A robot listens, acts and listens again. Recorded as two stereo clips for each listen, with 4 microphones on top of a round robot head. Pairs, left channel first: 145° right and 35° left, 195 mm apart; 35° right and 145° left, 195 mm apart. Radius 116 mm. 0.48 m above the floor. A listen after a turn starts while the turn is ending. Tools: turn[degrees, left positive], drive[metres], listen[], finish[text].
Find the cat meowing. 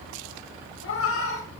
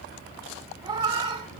Thought: The cat meowing: 155° right.
Action: turn[-155]
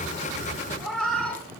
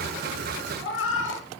Thought: The cat meowing is now 60° right.
Action: turn[-60]
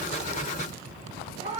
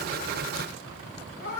Thought: The cat meowing is now 20° right.
Action: turn[-20]
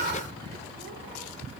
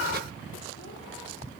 Action: listen[]
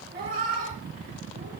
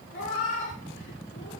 Thought: The cat meowing is now 10° right.
Action: turn[-10]
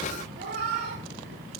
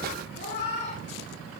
Action: finish[Facing the cat meowing.]